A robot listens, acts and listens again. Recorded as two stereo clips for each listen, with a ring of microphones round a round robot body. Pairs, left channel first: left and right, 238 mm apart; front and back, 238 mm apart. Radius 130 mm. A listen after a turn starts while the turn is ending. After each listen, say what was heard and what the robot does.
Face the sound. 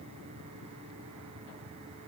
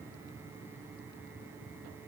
Keep listening.
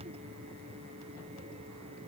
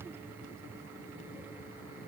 Keep listening.
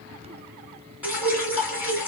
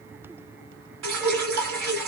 The dripping: 175° right. Turn 175° right.
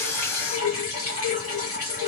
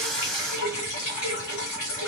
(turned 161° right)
The dripping is now 10° right. Turn 10° right.
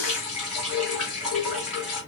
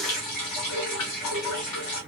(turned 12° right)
Found it: dripping, straight ahead.